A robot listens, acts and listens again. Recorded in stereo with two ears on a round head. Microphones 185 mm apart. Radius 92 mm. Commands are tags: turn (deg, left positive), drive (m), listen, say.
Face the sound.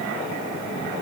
<listen/>
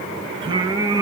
<turn deg="-15"/>
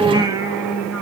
<turn deg="-30"/>
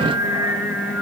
<turn deg="-30"/>
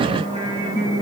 <turn deg="-15"/>
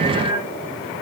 <listen/>
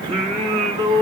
<turn deg="-25"/>
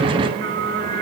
<turn deg="-135"/>
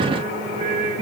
<turn deg="-30"/>
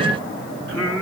<say>Found it: singing, straight ahead, 2 to 4 m away.</say>